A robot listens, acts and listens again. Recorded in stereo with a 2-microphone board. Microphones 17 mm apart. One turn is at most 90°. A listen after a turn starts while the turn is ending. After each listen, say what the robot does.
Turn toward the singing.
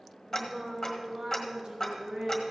Turn 70° right.
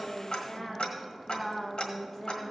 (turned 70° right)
Turn 30° left.
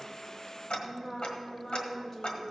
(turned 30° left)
Turn 20° left.
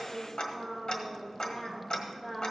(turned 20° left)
Found it: singing, straight ahead.